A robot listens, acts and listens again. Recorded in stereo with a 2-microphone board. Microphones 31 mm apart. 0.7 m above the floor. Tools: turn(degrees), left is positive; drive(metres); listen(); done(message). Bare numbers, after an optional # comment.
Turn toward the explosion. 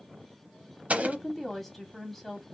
# The explosion: about 55° right or 125° right.
turn(-55)
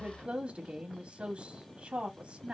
listen()
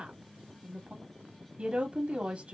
done("I heard an explosion, but can't make it out now. It was about straight ahead or 70° right.")